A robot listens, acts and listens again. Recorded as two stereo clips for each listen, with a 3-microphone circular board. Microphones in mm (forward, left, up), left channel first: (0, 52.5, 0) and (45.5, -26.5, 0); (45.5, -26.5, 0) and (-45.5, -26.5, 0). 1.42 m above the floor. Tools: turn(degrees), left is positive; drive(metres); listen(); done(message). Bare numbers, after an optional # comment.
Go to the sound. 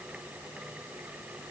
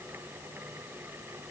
listen()
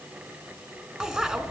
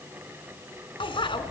# The bicycle bell: 20° left.
turn(20)
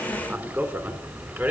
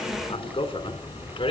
drive(1.0)
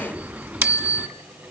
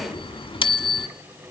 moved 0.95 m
# The bicycle bell is now 10° left.
turn(10)
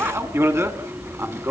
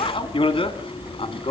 drive(1.0)
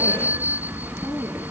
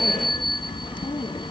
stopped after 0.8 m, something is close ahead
done("Arrived at the bicycle bell, straight ahead.")